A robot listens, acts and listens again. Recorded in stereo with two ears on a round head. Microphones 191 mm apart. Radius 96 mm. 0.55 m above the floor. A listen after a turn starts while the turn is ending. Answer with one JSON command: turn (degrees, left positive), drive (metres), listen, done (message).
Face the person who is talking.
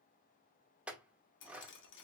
{"listen": true}
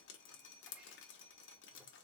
{"listen": true}
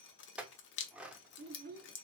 {"turn": -45}
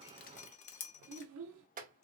{"turn": -85}
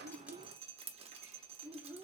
{"turn": -10}
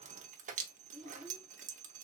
{"done": "Facing the child speaking, under 1 m away."}